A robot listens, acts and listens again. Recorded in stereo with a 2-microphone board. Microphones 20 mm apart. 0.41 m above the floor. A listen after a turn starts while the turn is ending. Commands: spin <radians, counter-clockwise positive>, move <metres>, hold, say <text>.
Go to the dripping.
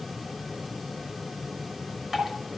spin -0.61
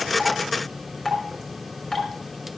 move 1.0
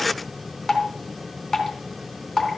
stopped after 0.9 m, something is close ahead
say Something is in my way. I am facing the dripping but have not reached it.